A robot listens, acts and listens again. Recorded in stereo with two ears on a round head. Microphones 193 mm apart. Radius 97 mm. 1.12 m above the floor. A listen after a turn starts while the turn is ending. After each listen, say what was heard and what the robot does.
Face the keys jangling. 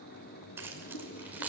Turn 30° right.
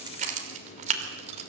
So it is at 145° right. Turn 145° right.
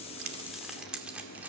Found it: keys jangling, straight ahead.